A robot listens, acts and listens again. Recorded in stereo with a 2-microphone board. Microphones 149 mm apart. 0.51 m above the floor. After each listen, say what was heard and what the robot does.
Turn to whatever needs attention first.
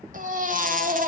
The baby crying: about 65° right or 115° right. Turn 65° right.
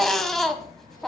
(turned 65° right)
Found it: a baby crying, straight ahead.